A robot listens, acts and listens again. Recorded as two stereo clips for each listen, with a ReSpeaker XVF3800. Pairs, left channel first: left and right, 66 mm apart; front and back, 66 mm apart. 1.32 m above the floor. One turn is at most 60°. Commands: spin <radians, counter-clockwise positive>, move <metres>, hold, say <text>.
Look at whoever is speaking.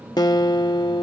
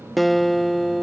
hold
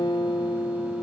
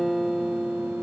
hold
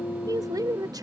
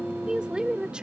spin -1.05
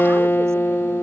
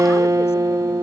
spin -0.79
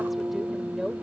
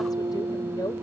say Facing the woman speaking.